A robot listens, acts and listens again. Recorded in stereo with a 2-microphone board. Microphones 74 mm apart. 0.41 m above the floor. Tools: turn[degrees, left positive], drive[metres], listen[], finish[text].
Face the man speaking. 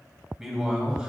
Action: turn[-30]
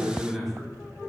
Action: turn[30]
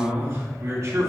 Thought: So it is at 45° right.
Action: turn[-45]
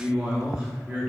Thought: The man speaking is now 15° right.
Action: turn[-15]
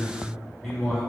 Action: finish[Found it: a man speaking, straight ahead.]